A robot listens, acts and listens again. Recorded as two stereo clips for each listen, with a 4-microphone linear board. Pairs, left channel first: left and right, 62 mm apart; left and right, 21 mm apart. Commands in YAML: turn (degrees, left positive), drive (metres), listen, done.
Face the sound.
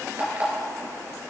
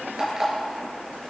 turn: -30
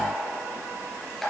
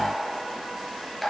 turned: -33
done: "Found it: an alarm clock, straight ahead."